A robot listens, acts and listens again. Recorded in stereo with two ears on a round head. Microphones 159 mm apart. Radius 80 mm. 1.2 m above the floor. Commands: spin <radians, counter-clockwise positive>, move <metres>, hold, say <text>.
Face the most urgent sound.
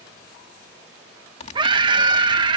spin -0.44
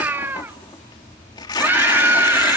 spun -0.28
spin -0.17
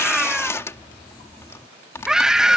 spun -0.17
say Facing the scream.